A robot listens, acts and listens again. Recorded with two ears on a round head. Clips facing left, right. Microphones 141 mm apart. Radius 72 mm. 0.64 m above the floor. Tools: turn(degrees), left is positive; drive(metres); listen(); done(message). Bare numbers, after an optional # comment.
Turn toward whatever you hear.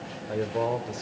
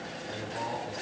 # The man speaking: about 65° left or 115° left.
turn(65)
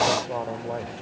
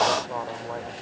# So it is at 25° left.
turn(25)
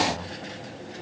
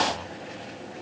# The man speaking is now 25° left.
turn(25)
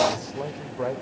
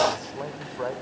# The man speaking is now 15° left.
turn(15)
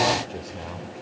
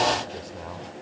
done("Facing the man speaking.")